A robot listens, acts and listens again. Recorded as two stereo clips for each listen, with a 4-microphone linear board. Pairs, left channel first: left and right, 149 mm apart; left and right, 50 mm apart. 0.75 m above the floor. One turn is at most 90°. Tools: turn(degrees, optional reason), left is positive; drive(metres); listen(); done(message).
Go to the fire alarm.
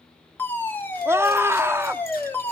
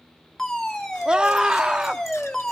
turn(degrees=30)
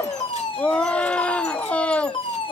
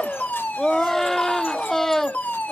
turn(degrees=90, reason="So it is at 140° left.")
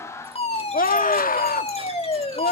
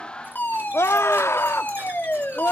turn(degrees=50, reason="The fire alarm is now 50° left.")
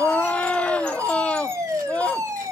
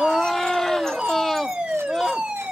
turn(degrees=-25, reason="The fire alarm is now 25° right.")
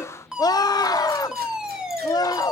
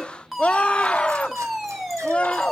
drive(metres=1.0)
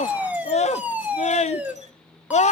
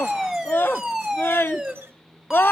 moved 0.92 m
turn(degrees=-15, reason="The fire alarm is now 15° right.")
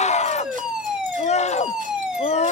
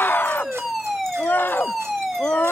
drive(metres=1.0)
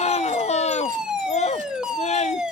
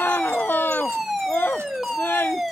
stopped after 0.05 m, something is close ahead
done("I am next to the fire alarm.")